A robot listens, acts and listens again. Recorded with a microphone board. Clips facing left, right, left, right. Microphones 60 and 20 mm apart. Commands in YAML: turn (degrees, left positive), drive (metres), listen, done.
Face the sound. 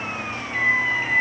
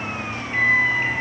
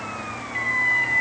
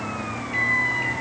turn: -35
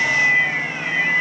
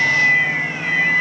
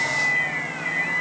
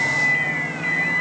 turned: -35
turn: -110
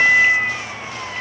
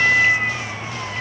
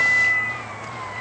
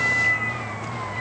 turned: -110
done: "Facing the microwave, over 4 m away."